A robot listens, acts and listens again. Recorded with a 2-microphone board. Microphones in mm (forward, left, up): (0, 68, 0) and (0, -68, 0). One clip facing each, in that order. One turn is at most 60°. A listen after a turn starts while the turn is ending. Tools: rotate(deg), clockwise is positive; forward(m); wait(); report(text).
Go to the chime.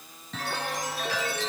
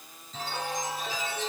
rotate(-60)
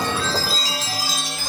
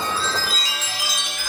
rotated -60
rotate(-35)
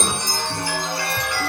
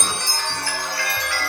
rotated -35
rotate(-20)
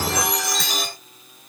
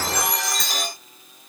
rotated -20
forward(1.0)
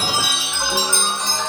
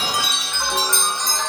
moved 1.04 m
forward(1.0)
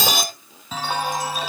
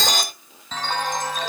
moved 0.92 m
rotate(-10)
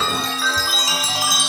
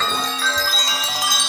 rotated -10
forward(1.0)
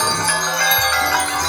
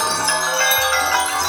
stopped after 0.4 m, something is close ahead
report("I am next to the chime.")